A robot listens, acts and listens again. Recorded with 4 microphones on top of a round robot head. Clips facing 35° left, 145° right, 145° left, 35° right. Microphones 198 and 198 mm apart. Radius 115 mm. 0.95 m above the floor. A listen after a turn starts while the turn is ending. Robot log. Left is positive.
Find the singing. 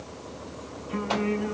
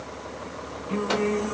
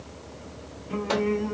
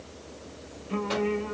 note: The singing: 105° right.
cmd yaw -105
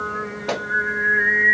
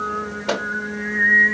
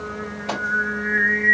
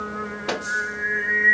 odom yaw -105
end: Found it: singing, straight ahead, 1 to 2 m away.